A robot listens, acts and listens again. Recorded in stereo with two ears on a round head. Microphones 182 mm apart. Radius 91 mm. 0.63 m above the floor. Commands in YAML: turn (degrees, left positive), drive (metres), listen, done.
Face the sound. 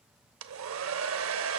turn: -70
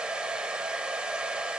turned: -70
done: "Found it: a hair dryer, straight ahead, under 1 m away."